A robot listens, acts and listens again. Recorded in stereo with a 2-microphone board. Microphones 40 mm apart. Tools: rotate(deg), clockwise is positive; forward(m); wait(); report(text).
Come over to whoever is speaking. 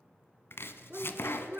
rotate(50)
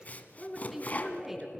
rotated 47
forward(1.0)
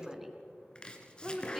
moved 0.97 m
rotate(10)
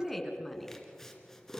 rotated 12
forward(1.0)
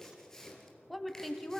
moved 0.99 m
forward(1.0)
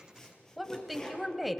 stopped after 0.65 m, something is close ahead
report("I am next to the woman speaking.")